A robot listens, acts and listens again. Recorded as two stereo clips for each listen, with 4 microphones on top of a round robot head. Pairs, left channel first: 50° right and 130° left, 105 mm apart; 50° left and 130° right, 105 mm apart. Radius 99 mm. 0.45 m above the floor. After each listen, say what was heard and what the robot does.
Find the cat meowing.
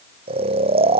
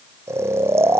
Keep listening.
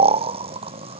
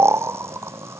Keep listening.
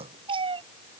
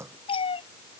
The cat meowing: 90° left. Turn 90° left.
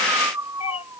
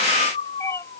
The cat meowing is now 15° right. Turn 15° right.
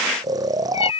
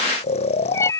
The cat meowing is now 15° right. Turn 15° right.
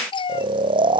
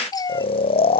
Found it: a cat meowing, straight ahead.